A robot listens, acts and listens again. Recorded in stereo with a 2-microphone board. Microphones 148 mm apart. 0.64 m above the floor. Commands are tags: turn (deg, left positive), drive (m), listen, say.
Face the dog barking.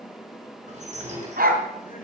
<turn deg="-90"/>
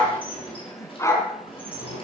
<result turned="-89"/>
<turn deg="20"/>
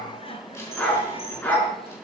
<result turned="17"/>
<turn deg="10"/>
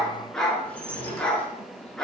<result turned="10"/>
<say>Facing the dog barking, over 4 m away.</say>